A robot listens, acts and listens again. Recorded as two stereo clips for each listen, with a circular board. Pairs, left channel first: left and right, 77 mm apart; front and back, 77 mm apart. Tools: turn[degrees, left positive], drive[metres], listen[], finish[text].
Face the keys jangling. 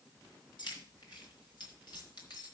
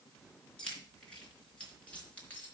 Thought: The keys jangling: 70° left.
Action: turn[70]
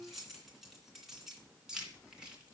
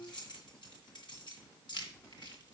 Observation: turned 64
Thought: The keys jangling is now 15° right.
Action: turn[-15]
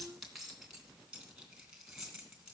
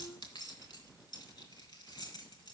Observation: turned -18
Thought: The keys jangling is now 10° right.
Action: turn[-10]
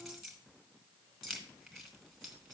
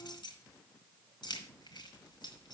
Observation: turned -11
Action: finish[Found it: keys jangling, straight ahead.]